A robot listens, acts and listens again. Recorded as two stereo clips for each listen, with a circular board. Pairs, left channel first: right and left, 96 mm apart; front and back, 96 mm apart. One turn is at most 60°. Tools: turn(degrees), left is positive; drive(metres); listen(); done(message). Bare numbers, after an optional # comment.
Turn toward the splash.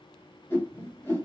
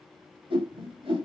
listen()
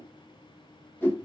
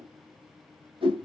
listen()
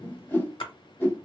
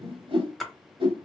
# The splash: 90° right.
turn(-60)
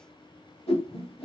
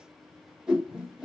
# Nothing new. It was at 30° right.
turn(-30)
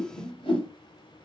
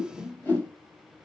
done("I heard a splash from this way, but can't make it out now.")